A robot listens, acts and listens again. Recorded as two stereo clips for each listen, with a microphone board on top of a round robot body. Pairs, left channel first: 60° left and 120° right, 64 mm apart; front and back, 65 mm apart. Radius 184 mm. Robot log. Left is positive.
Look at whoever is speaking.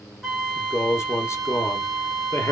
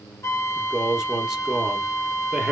note: The man speaking: 100° left.
cmd yaw +100
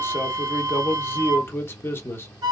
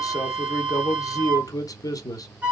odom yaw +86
note: The man speaking is now 10° left.
cmd yaw +10
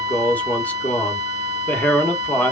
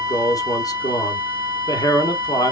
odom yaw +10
end: Facing the man speaking.